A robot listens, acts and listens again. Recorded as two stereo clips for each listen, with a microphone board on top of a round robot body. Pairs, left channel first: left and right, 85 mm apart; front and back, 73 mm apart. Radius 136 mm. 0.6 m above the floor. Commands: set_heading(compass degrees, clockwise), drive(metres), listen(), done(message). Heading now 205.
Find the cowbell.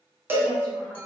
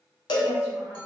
set_heading(230)
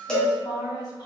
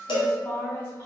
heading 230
set_heading(220)
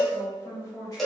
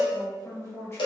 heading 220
done("Found it: a cowbell, straight ahead.")